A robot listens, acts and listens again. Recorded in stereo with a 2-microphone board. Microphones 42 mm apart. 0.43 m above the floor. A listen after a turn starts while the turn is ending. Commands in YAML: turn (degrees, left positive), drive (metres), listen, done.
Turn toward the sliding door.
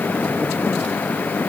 listen: true
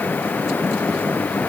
listen: true
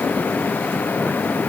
done: "I can't make out a sliding door."